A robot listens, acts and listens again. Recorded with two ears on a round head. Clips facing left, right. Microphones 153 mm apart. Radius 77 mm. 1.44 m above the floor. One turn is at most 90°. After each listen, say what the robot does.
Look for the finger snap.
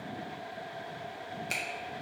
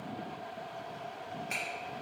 Turn 40° left.
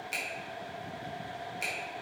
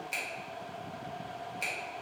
Found it: a finger snap, straight ahead, 1 to 2 m away.